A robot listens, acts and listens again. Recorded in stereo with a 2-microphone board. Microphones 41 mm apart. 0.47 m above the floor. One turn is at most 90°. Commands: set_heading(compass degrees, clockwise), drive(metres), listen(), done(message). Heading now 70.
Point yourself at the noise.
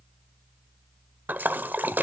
set_heading(115)
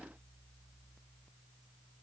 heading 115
listen()
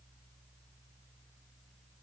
done("I heard a splash, but can't make it out now. It was about straight ahead or 90° right.")